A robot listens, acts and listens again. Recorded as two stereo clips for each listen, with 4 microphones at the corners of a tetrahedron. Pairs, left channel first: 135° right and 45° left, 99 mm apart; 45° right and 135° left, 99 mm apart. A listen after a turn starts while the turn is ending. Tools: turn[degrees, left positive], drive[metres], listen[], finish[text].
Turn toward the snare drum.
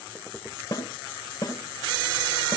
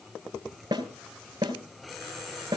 Thought: The snare drum: 175° left.
Action: turn[175]
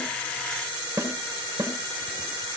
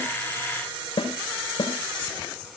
Thought: The snare drum is now 15° right.
Action: turn[-15]
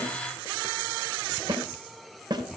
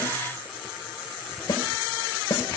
Action: finish[Facing the snare drum, 2 to 4 m away.]